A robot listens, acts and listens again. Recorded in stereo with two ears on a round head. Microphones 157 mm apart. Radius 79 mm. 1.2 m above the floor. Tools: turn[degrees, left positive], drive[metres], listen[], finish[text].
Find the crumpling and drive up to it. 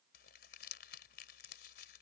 Thought: The crumpling: about 65° left or 115° left.
Action: turn[65]
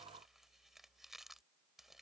Action: drive[1.0]
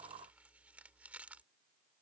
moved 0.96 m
Thought: The crumpling is now 10° right.
Action: turn[-10]
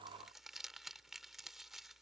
Action: drive[1.0]
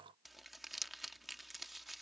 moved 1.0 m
Action: drive[1.0]
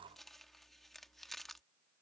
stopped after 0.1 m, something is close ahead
Action: finish[I am next to the crumpling.]